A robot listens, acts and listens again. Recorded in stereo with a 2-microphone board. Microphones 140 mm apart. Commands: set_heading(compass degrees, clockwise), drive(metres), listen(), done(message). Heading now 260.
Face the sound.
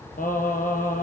set_heading(170)
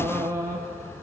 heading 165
set_heading(185)
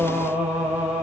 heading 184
set_heading(194)
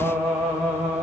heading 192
done("Facing the singing.")